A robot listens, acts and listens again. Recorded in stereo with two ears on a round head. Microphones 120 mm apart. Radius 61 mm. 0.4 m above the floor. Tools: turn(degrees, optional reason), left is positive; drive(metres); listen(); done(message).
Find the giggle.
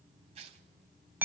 listen()
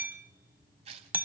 listen()
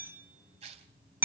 done("I can't make out a giggle to turn to.")